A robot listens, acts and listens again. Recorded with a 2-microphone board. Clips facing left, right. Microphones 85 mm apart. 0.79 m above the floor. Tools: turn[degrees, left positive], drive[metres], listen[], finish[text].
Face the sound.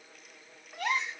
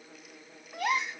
Action: turn[-30]
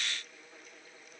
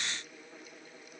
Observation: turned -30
Action: listen[]
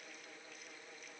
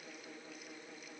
Action: finish[I heard a gasp, but can't make it out now. It was about 25° left or 145° right.]